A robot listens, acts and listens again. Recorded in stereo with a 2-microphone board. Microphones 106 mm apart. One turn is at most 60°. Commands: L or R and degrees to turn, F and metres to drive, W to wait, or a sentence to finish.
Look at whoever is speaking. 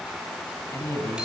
L25
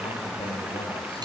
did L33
W
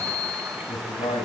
L60
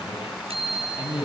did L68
L50
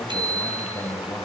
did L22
L30
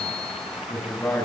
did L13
L15
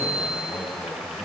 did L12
W
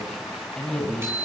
Facing the man speaking, over 4 m away.